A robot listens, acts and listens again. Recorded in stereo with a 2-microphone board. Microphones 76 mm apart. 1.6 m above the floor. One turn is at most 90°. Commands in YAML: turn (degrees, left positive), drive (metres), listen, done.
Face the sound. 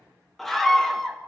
turn: 30
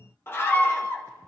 turn: 90
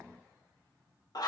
turn: 60
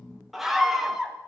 done: "Found it: a scream, straight ahead, 1 to 2 m away."